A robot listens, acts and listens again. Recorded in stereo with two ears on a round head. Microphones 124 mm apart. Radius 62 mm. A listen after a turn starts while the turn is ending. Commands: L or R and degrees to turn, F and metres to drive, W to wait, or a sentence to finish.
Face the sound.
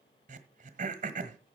R60
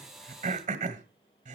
R60
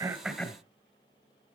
L15
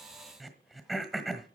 Facing the throat clearing.